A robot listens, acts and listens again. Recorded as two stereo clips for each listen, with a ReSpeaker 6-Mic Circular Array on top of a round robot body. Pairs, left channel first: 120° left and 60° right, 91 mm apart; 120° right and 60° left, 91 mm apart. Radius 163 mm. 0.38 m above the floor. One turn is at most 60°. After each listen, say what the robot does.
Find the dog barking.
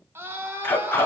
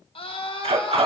Turn 50° left.
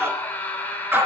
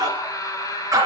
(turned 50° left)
Facing the dog barking, 2 to 4 m away.